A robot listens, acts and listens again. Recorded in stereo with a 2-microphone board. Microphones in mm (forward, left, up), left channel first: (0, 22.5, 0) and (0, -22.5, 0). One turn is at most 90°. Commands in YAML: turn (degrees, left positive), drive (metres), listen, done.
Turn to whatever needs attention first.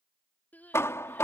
turn: 40
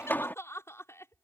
turn: 90
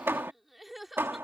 done: "Facing the crying."